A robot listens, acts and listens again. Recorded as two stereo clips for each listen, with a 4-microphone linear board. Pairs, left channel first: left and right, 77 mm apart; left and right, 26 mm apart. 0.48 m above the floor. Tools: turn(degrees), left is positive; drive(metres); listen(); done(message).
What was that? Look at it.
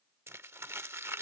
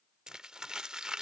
turn(degrees=-35)
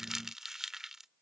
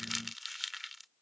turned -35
done("Found it: crumpling, straight ahead.")